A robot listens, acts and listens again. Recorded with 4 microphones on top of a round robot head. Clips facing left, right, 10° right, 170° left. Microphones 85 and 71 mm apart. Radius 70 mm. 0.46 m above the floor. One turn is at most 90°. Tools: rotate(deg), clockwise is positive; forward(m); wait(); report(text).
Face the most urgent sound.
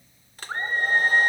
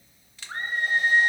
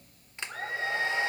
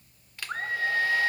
rotate(-90)
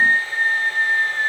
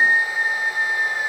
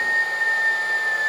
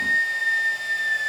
rotate(-65)
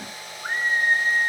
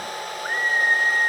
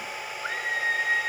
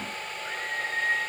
report("Found it: a scream, straight ahead.")